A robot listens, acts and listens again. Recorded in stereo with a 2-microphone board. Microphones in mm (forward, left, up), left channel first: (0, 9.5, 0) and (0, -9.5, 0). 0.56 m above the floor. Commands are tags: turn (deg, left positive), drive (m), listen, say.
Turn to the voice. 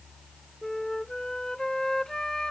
<listen/>
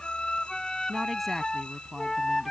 <turn deg="30"/>
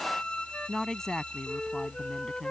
<turn deg="145"/>
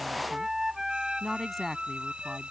<say>Facing the woman speaking.</say>